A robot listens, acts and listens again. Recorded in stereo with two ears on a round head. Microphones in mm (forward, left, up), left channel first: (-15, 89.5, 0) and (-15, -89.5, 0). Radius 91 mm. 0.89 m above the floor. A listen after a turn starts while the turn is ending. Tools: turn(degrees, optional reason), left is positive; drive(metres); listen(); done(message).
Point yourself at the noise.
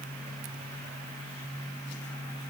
listen()
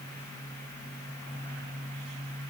listen()
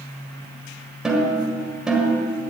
turn(degrees=-30)
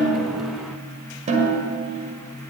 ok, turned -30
turn(degrees=-140, reason="So it is at 140° right.")
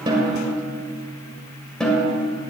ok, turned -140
done("Found it: a snare drum, straight ahead, 2 to 4 m away.")